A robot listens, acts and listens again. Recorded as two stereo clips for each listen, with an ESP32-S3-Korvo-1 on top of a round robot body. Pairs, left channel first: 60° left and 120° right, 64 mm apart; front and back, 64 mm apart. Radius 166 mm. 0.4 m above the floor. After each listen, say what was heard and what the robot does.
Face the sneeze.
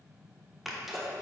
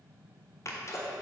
The sneeze: 35° right. Turn 35° right.
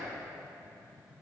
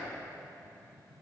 Facing where the sneeze came from. I can't hear it now.